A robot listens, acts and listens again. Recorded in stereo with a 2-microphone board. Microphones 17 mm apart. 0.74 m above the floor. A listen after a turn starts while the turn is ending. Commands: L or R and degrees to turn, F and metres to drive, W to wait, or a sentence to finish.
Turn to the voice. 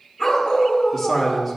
L30
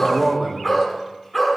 R20
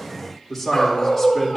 Facing the man speaking, 2 to 4 m away.